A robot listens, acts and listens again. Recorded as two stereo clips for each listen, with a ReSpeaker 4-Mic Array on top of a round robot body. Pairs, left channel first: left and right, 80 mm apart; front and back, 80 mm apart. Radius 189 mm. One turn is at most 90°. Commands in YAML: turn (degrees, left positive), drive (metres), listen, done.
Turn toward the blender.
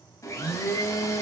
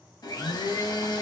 turn: 40
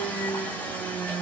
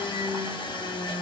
turn: 15
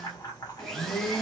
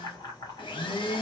done: "Found it: a blender, straight ahead."